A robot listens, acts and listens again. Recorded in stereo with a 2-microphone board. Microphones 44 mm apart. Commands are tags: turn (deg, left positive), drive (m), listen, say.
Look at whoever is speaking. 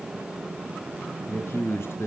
<turn deg="65"/>
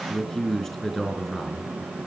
<say>Found it: a man speaking, straight ahead.</say>